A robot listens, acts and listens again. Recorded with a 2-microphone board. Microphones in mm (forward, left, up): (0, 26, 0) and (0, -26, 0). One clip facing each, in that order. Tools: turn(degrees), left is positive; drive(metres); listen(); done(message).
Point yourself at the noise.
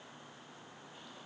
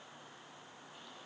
listen()
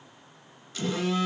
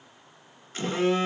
turn(degrees=-35)
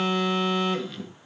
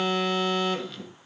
done("Found it: a phone buzzing, straight ahead, 1 to 2 m away.")